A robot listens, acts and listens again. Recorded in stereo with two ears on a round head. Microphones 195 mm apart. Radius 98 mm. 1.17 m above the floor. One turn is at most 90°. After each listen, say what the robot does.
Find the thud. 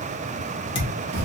Turn 25° left.
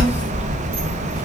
Keep listening.
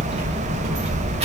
I heard a thud, but can't make it out now. It was about straight ahead or 130° left.